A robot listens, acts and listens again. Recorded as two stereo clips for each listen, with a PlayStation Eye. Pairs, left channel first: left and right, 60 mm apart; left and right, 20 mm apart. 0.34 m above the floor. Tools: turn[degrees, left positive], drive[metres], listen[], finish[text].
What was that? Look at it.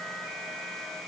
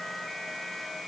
Action: listen[]
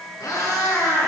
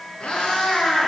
Action: turn[90]
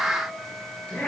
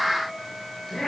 Thought: So it is at 20° left.
Action: turn[20]
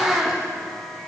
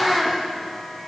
Action: finish[Facing the cat meowing, over 4 m away.]